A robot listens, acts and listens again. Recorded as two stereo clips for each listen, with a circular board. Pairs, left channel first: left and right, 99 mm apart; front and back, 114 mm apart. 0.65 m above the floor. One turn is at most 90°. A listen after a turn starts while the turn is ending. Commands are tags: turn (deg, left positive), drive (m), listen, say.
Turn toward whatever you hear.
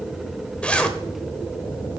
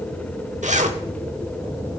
<turn deg="90"/>
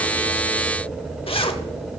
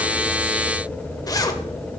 <turn deg="60"/>
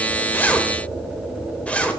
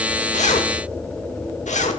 <turn deg="10"/>
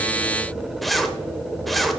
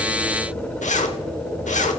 <say>Facing the zipper.</say>